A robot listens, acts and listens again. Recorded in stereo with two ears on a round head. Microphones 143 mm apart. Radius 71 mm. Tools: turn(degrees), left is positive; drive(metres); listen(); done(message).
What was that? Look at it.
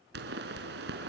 turn(degrees=-70)
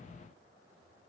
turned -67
listen()
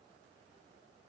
done("I heard a pop, but can't make it out now. It was about 5° right or 40° right.")